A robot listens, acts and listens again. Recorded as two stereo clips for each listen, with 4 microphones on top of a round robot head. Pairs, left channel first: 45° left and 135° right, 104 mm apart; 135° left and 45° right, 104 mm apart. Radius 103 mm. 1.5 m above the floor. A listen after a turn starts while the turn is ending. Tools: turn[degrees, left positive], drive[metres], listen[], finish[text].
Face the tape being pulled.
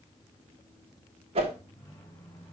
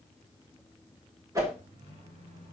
Action: listen[]
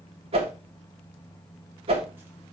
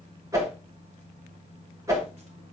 Action: listen[]
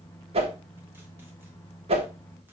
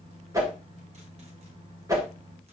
Action: finish[I can't make out tape being pulled to turn to.]